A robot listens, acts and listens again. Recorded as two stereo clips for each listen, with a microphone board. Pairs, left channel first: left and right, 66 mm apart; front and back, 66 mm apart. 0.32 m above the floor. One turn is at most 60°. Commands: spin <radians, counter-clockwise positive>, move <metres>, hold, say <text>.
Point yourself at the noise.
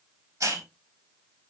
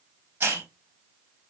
spin -1.05
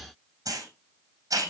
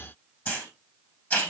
spin -1.05
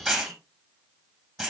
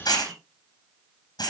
say Found it: a hiss, straight ahead.